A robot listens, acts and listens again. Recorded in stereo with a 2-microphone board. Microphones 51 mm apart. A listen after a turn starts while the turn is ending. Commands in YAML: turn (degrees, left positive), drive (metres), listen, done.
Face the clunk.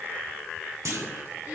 turn: -70
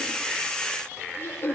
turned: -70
listen: true
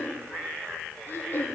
done: "I heard a clunk, but can't make it out now. It was about straight ahead or 40° right."